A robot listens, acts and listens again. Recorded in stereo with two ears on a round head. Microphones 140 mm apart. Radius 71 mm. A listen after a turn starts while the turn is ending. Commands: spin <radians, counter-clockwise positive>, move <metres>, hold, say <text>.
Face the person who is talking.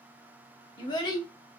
spin 0.52
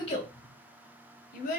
spin 2.09
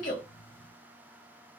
hold
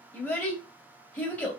spin 0.17
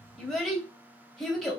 say Found it: a child speaking, straight ahead, 1 to 2 m away.